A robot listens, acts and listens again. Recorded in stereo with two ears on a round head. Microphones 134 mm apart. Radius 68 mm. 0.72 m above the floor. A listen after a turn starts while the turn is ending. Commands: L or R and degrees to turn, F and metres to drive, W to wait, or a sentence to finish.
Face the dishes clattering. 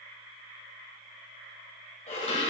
L45
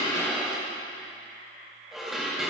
Found it: dishes clattering, straight ahead.